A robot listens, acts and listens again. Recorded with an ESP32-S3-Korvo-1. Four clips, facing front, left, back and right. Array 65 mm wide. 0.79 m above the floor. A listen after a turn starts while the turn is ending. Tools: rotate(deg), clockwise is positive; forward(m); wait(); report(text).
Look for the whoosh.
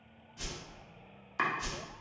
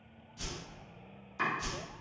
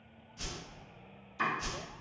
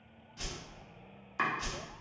rotate(85)
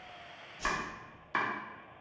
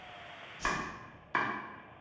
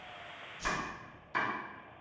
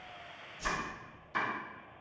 rotate(-10)
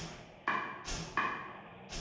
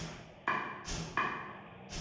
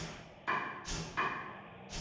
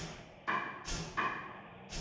report("Facing the whoosh.")